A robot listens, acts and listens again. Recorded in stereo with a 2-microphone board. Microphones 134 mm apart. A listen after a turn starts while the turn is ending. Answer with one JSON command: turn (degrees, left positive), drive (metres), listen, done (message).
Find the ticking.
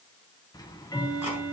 {"turn": 30}
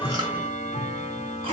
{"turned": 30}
{"turn": 120}
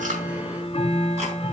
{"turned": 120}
{"turn": 45}
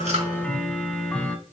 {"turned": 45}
{"turn": 10}
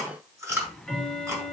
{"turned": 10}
{"done": "Facing the ticking."}